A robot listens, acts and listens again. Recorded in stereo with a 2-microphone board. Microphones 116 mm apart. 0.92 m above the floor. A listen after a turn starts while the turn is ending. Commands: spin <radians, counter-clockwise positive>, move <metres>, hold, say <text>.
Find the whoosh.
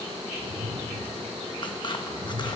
spin -1.05
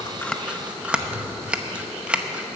hold
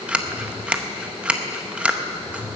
say Facing the whoosh, 1 to 2 m away.